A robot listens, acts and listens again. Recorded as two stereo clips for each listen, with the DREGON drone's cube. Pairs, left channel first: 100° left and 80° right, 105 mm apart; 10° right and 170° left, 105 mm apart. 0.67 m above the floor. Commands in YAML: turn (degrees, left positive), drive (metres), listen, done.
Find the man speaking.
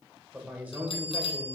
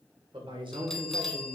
turn: -145
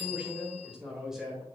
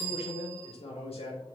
done: "Found it: a man speaking, straight ahead."